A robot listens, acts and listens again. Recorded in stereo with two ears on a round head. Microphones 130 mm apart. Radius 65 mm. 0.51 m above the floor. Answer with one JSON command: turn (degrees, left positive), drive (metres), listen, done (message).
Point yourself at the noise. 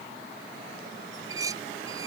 {"turn": -25}
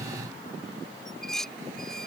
{"done": "Facing the dishes clattering."}